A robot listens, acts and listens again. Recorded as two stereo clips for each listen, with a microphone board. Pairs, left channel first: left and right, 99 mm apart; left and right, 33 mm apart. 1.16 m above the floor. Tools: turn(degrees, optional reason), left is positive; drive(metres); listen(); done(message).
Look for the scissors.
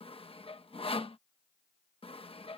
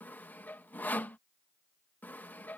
listen()
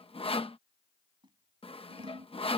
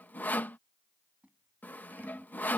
turn(degrees=-50, reason="The scissors: about 50° right or 130° right.")
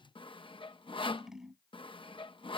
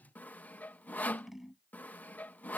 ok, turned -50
done("Facing the scissors.")